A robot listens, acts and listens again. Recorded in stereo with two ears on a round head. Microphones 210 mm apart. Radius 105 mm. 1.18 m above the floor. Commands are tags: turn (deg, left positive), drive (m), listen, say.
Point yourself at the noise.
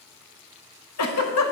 <turn deg="70"/>
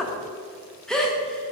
<say>Found it: a giggle, straight ahead, under 1 m away.</say>